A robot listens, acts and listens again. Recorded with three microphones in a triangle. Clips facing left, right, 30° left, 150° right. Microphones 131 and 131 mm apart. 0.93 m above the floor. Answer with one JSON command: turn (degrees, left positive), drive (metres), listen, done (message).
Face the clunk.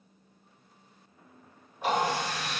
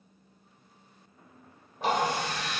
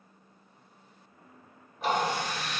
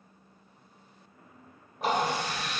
{"listen": true}
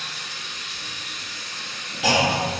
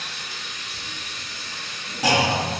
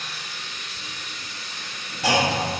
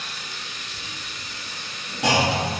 {"turn": -145}
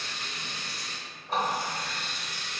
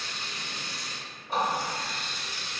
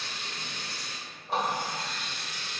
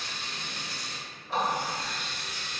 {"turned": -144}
{"done": "Facing where the clunk came from. I can't hear it now."}